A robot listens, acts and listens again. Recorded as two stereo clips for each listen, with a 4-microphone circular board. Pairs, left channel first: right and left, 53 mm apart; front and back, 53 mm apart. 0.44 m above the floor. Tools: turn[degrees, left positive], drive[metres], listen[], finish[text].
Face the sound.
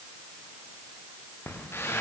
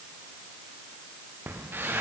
Thought: The squeak: 130° right.
Action: turn[-130]
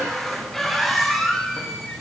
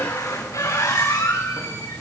Action: finish[Facing the squeak, over 4 m away.]